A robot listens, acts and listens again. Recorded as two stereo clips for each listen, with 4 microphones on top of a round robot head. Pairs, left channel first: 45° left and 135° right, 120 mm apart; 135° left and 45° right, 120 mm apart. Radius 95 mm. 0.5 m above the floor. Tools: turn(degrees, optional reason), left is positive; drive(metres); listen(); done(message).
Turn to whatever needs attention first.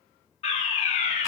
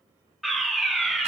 turn(degrees=40, reason="The fire alarm: 40° left.")
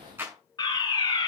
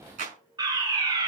done("Found it: a fire alarm, straight ahead.")